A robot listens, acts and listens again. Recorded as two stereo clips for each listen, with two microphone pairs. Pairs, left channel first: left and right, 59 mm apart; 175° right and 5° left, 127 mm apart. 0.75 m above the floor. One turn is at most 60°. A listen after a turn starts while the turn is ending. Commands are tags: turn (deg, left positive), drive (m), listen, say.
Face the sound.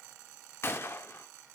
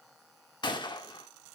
<turn deg="60"/>
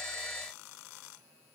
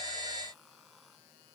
<turn deg="60"/>
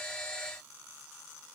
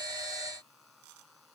<turn deg="15"/>
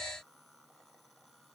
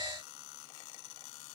<say>Facing where the gunshot came from. I can't hear it now.</say>